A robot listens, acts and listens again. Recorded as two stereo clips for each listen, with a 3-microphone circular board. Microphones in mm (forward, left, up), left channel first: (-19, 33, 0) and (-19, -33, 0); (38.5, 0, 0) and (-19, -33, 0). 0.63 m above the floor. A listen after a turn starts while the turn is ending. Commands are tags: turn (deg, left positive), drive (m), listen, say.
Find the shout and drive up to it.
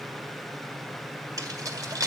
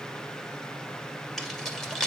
<listen/>
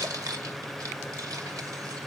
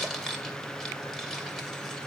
<listen/>
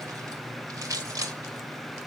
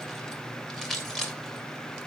<say>I can't make out a shout, only keys jangling.</say>